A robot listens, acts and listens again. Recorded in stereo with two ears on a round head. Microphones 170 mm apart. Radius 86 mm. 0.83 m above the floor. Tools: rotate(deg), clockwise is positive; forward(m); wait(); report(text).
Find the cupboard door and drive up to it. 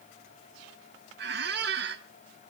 wait()
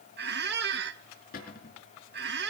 rotate(-45)
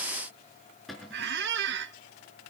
forward(1.0)
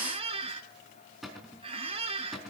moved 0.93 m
forward(1.0)
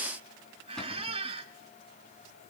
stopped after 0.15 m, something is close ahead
wait()
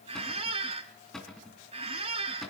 report("Something is in my way. I am facing the cupboard door but have not reached it.")